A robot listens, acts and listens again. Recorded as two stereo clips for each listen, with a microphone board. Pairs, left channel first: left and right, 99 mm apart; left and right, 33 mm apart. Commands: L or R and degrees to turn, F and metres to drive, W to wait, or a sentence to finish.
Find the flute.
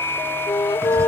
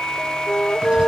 L55
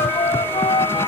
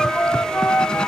L65
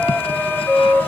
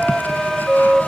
Found it: a flute, straight ahead.